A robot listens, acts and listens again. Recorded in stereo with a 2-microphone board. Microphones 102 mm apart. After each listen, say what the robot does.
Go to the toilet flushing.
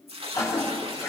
Turn 35° left.
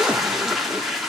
Drive 1.0 m forward.
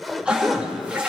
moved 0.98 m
Turn 10° right.
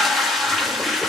Drive 1.0 m forward.
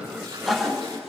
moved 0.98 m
Drive 1.0 m forward.
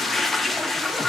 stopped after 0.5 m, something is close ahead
I am next to the toilet flushing.